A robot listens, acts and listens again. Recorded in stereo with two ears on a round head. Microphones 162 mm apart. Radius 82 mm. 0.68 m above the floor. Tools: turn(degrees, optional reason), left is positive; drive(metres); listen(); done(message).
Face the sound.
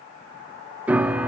turn(degrees=-30)
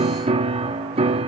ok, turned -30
turn(degrees=-140, reason="So it is at 140° right.")
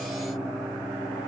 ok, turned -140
done("Facing the piano.")